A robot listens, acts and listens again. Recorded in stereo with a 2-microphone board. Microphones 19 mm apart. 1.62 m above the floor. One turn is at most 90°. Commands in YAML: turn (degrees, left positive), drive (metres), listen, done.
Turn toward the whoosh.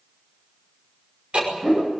turn: -45
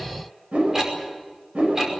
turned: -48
turn: -85
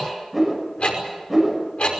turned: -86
done: "Found it: a whoosh, straight ahead, over 4 m away."